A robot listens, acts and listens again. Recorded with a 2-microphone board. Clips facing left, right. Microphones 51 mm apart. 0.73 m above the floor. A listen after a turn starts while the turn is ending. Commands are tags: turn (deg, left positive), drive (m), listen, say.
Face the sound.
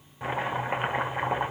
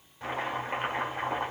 <turn deg="20"/>
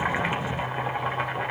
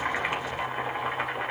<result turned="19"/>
<say>Found it: chopping, straight ahead.</say>